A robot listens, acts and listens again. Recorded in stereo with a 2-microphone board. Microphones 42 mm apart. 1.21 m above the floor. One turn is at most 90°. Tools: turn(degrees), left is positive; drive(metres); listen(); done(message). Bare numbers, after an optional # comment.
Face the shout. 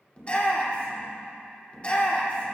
# The shout: about 30° left or 150° left.
turn(30)
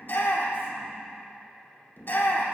# So it is at 120° left.
turn(90)
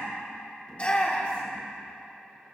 # The shout is now 35° left.
turn(35)
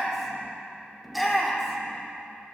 done("Found it: a shout, straight ahead.")